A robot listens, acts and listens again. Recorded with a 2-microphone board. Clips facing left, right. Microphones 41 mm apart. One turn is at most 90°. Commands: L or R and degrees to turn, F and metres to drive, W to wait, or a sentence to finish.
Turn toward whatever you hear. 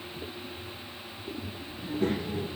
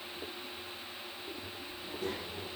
L55
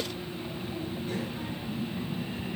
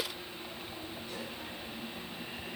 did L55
L55
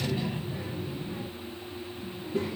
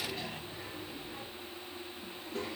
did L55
L15
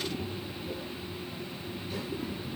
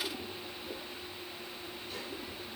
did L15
Found it: a child speaking, straight ahead, 2 to 4 m away.